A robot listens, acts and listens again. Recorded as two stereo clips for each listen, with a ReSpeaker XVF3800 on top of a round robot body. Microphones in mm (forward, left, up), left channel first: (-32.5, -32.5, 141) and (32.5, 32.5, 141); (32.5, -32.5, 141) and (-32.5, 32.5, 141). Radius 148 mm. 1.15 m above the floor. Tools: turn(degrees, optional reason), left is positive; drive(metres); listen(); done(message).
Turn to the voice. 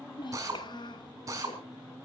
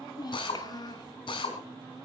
turn(degrees=-95, reason="The child speaking: 95° right.")
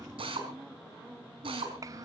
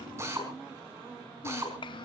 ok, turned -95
turn(degrees=-10, reason="The child speaking is now 10° right.")
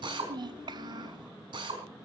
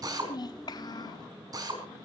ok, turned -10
done("Found it: a child speaking, straight ahead, 1 to 2 m away.")